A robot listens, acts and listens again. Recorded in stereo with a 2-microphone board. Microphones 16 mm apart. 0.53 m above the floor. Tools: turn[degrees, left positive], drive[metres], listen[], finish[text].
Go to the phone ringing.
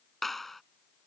Action: listen[]
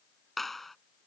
Action: listen[]
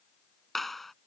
Action: finish[I can't make out a phone ringing, only a clap.]